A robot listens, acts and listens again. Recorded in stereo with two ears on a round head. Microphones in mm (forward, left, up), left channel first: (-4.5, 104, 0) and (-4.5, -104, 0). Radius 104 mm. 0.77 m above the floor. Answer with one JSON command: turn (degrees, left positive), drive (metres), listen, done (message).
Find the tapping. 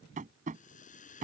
{"turn": -35}
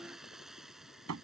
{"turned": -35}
{"turn": -110}
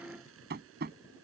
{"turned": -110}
{"turn": -45}
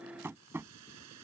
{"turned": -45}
{"turn": -10}
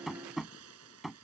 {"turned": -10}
{"done": "Facing the tapping."}